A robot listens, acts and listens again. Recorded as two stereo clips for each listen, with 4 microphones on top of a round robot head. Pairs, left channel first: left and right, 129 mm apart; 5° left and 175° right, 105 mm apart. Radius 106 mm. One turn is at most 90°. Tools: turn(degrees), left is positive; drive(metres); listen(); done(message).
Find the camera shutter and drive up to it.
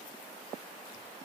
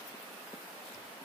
listen()
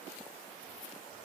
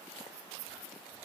listen()
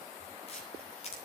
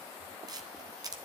turn(degrees=90)
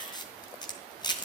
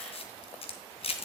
turn(degrees=35)
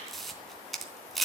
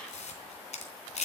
drive(metres=1.0)
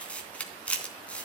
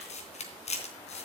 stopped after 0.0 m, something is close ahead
turn(degrees=10)
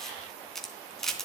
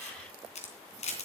done("Something is in my way. I am facing the camera shutter but have not reached it.")